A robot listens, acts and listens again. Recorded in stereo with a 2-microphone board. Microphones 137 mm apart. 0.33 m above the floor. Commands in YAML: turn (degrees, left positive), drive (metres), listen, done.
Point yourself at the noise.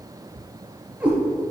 turn: -30
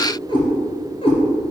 turn: 40
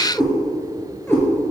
turn: 15
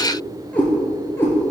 turn: 15
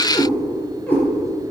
turn: 10
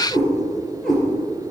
done: "Found it: a cat meowing, straight ahead, 2 to 4 m away."